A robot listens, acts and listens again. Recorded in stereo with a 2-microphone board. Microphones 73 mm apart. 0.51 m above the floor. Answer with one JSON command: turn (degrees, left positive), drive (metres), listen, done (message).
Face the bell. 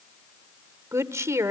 {"listen": true}
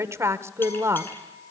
{"turn": 30}
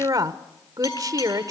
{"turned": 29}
{"turn": 120}
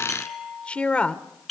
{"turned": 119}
{"done": "Facing the bell, over 4 m away."}